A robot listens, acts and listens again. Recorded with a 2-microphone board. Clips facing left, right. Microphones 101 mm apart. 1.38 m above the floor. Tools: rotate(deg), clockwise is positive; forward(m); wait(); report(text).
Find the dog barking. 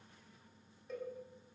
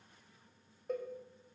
wait()
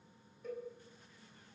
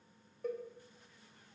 wait()
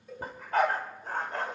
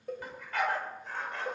rotate(-40)
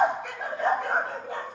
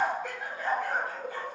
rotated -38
rotate(-105)
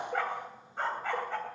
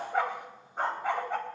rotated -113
rotate(15)
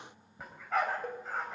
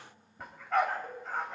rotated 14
report("Facing the dog barking.")